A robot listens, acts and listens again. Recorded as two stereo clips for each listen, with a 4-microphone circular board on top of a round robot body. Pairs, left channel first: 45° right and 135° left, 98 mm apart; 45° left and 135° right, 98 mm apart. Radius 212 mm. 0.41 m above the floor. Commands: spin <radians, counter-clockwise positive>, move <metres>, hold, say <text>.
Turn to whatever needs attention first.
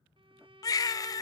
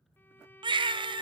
spin -1.75
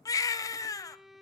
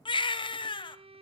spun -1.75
spin 0.17
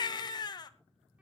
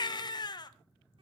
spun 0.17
say Found it: a baby crying, straight ahead.